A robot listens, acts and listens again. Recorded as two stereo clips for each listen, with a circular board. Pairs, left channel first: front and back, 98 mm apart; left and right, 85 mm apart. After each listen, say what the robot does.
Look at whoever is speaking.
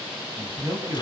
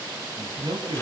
Turn 125° right.
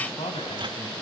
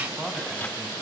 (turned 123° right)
Found it: a man speaking, straight ahead.